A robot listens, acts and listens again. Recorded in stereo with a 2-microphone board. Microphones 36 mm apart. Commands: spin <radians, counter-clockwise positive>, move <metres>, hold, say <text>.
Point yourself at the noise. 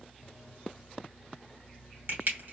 spin -1.22
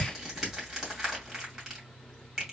spin -0.17
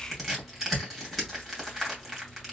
say Found it: crushing, straight ahead, 2 to 4 m away.